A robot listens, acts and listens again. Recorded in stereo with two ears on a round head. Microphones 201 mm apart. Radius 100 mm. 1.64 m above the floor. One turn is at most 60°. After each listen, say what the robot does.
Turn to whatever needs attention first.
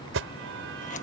Turn 60° right.
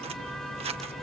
Facing the alarm.